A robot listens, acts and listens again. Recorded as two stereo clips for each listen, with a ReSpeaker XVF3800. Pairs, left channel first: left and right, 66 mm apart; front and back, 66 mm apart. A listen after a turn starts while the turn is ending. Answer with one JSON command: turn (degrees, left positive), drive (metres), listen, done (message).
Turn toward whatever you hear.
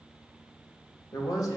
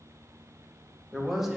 {"turn": 100}
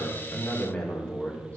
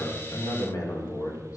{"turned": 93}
{"turn": 25}
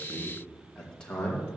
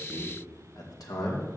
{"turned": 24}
{"turn": 20}
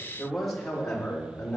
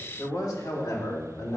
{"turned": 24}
{"turn": 15}
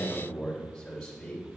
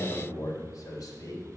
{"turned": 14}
{"done": "Found it: a man speaking, straight ahead, 2 to 4 m away."}